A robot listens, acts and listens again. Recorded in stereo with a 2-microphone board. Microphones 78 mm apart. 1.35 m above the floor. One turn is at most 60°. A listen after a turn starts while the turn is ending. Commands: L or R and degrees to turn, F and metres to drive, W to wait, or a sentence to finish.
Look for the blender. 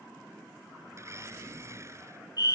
R35
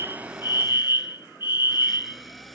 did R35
Found it: a blender, straight ahead.